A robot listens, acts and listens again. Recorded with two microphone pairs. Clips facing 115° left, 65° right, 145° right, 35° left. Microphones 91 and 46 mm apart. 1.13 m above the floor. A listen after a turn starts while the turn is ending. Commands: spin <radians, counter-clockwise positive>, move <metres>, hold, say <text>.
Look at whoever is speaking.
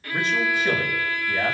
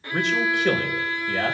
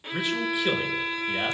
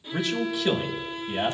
spin -1.22
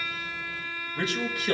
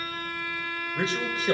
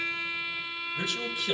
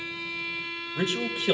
spin -0.17
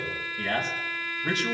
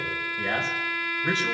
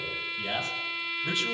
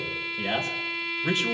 say Found it: a man speaking, straight ahead.